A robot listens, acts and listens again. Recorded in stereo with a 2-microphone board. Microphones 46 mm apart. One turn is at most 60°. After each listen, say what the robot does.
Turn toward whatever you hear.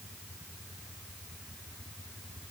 Keep listening.
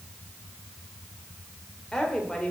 Turn 20° left.
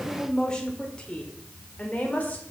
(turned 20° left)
Turn 35° left.
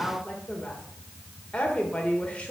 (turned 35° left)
Turn 25° left.
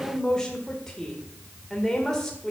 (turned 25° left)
Turn 10° left.
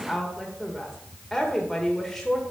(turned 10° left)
Facing the woman speaking, 1 to 2 m away.